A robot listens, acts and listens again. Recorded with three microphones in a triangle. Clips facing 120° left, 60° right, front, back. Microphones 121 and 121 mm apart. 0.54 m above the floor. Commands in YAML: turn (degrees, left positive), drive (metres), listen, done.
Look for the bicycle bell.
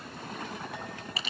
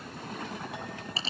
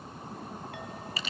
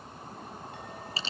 listen: true
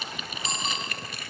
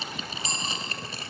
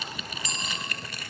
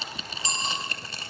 turn: 180
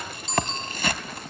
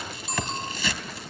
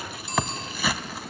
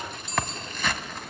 turn: 20
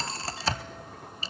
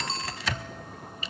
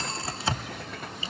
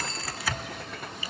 done: "Facing the bicycle bell."